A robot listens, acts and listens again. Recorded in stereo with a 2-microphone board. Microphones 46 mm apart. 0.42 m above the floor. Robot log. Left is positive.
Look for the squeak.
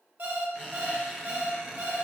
note: The squeak: about 20° right or 160° right.
cmd yaw -20
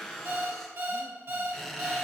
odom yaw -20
end: Facing the squeak.